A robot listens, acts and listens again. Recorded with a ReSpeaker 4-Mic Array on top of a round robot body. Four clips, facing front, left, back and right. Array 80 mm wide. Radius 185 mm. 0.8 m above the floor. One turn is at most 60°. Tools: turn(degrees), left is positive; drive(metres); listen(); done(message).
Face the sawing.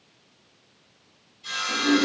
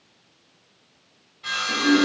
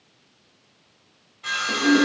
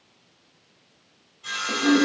turn(degrees=60)
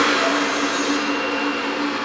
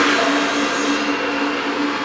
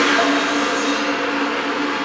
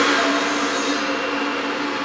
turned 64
turn(degrees=60)
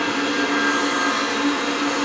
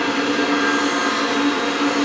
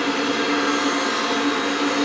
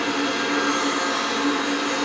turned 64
turn(degrees=25)
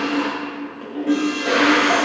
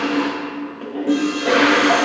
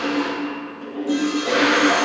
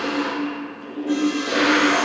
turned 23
done("Facing where the sawing came from. I can't hear it now.")